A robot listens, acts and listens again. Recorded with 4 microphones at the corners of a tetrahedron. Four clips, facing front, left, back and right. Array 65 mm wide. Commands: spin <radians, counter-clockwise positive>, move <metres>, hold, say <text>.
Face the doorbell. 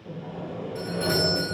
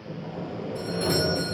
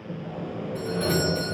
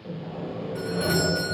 spin -1.22
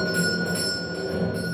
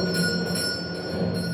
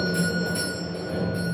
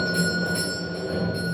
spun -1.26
say Found it: a doorbell, straight ahead, 1 to 2 m away.